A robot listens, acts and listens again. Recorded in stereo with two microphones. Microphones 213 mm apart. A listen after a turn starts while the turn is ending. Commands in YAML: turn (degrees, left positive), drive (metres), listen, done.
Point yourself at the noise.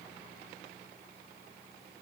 listen: true
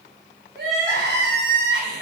turn: -60
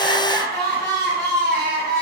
turn: -60
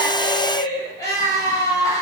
turn: 15
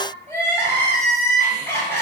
turn: 10
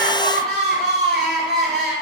done: "Found it: crying, straight ahead, 1 to 2 m away."